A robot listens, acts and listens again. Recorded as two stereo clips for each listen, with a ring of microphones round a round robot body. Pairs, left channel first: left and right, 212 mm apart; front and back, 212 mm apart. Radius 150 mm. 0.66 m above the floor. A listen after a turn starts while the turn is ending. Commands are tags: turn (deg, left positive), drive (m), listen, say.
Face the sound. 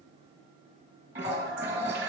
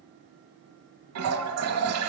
<turn deg="-170"/>
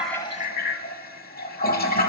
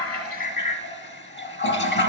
<turn deg="40"/>
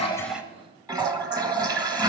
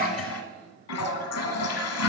<turn deg="-15"/>
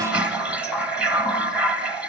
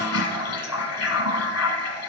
<say>Facing the toilet flushing, 1 to 2 m away.</say>